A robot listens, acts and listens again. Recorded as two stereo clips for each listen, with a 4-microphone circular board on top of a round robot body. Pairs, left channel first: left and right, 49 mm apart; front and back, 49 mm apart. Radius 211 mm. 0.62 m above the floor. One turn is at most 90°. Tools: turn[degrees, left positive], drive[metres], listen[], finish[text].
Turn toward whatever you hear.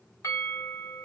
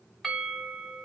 Thought: The bell: 90° left.
Action: turn[90]
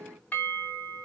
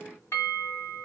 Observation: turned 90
Thought: The bell is now 35° left.
Action: turn[35]
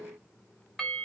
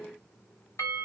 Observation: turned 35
Action: finish[Found it: a bell, straight ahead, 1 to 2 m away.]